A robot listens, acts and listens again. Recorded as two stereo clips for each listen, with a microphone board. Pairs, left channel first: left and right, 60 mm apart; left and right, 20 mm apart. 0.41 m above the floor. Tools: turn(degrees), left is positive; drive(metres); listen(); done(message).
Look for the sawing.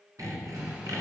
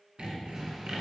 turn(degrees=-65)
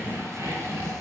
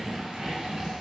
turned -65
turn(degrees=-50)
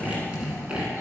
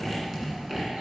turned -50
turn(degrees=-15)
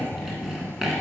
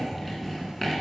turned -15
done("Facing the sawing.")